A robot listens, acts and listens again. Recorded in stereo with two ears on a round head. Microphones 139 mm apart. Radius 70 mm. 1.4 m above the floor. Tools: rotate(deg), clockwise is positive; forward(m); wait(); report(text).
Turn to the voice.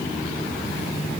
wait()
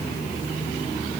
wait()
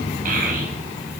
rotate(60)
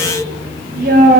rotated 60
rotate(60)
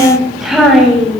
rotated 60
report("Facing the child speaking, over 4 m away.")